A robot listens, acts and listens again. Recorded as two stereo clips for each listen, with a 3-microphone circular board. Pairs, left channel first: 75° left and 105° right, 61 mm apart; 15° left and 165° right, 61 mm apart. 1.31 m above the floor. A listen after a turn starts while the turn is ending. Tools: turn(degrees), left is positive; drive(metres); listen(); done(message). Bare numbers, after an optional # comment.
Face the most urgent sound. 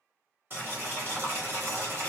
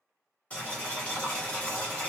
listen()
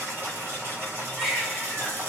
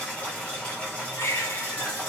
# The baby crying: 20° right.
turn(-20)
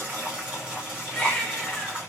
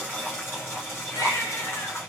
done("Found it: a baby crying, straight ahead, under 1 m away.")